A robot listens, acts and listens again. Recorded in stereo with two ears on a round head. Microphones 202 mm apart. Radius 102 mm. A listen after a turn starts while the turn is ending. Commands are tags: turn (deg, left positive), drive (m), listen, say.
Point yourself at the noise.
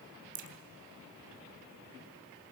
<turn deg="-55"/>
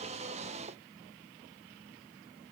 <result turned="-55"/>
<listen/>
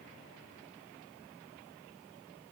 <say>I heard a crack, but can't make it out now. It was about straight ahead or 70° right.</say>